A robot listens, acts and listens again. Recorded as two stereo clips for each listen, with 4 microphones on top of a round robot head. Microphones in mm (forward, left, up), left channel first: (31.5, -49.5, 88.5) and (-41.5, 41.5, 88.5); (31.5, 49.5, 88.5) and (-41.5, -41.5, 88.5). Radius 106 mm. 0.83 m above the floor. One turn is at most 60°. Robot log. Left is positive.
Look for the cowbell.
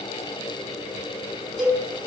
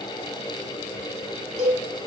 note: The cowbell: 145° right.
cmd yaw -60
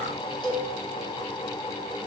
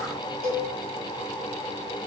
note: The cowbell is now 100° right.
cmd yaw -60
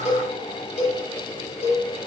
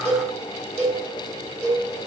note: The cowbell is now 30° right.
cmd yaw -30
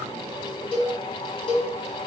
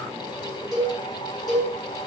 end: Facing the cowbell, 1 to 2 m away.